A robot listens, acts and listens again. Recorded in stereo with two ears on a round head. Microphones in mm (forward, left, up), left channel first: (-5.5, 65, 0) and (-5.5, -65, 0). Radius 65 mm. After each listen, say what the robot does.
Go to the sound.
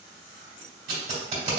Turn 50° right.
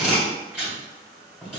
Drive 1.0 m forward.
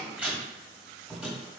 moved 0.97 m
Turn 10° right.
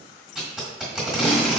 Drive 1.0 m forward.
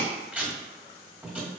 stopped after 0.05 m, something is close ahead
Turn 10° right.
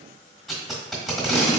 Arrived at the tape being pulled, straight ahead.